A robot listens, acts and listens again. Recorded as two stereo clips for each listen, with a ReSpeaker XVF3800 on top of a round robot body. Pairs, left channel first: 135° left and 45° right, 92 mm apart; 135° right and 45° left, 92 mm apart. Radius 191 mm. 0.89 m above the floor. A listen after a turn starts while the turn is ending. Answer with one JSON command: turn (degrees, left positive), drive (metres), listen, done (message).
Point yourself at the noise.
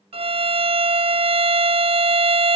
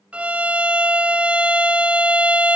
{"turn": -35}
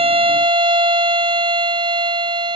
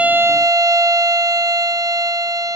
{"turn": -10}
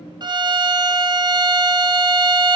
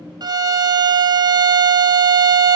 {"done": "Found it: a violin, straight ahead."}